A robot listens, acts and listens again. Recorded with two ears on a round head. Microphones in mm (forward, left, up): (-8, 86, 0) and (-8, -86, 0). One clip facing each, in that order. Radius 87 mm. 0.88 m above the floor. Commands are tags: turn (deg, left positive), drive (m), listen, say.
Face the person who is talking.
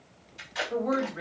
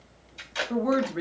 <turn deg="-60"/>
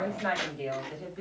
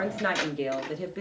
<turn deg="-75"/>
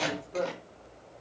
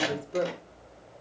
<turn deg="-30"/>
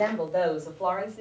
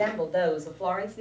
<turn deg="-10"/>
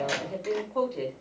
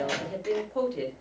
<say>Found it: a woman speaking, straight ahead.</say>